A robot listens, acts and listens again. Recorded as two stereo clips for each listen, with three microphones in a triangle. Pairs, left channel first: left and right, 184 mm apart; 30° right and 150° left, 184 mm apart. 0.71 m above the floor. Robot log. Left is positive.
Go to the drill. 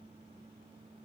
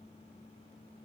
cmd idle
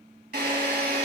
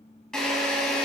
note: The drill: 115° right.
cmd yaw -115
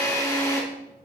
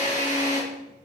note: The drill is now 20° left.
cmd yaw +20
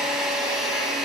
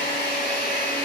cmd fwd 1.0
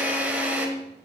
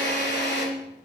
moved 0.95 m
note: The drill is now 10° right.
cmd yaw -10
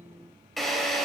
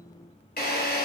cmd fwd 1.0
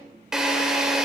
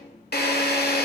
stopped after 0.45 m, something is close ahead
end: I am next to the drill.